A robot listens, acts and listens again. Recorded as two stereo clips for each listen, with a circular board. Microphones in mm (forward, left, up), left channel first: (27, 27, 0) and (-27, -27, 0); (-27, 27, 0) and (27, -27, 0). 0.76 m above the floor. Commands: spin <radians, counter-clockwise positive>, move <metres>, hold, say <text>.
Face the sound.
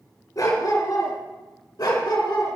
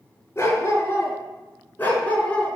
spin 1.13
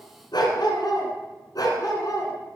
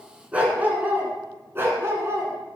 spin 0.17
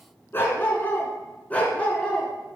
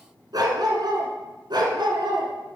spin -0.52
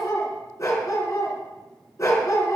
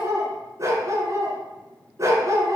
say Found it: a dog barking, straight ahead, 2 to 4 m away.